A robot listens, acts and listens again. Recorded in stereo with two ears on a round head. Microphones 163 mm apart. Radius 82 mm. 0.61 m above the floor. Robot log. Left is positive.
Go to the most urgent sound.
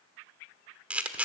cmd idle
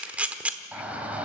cmd yaw -30
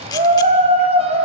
note: So it is at 140° right.
cmd yaw -140
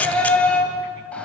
cmd fwd 1.0
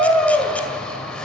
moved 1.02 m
cmd fwd 1.0
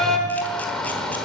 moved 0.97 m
cmd fwd 1.0
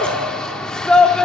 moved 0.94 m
cmd fwd 1.0
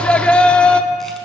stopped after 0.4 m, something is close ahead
note: The shout is now 10° left.
cmd yaw +10
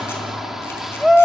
end: Arrived at the shout, straight ahead.